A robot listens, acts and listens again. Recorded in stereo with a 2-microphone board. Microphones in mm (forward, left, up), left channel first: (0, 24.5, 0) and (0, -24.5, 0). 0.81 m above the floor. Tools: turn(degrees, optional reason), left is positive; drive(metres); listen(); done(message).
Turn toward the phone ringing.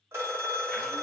turn(degrees=-70, reason="The phone ringing: about 70° right or 110° right.")
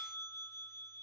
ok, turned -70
turn(degrees=-10, reason="So it is at 10° right.")
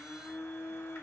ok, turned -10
listen()
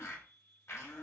listen()
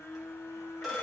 done("Facing the phone ringing, 1 to 2 m away.")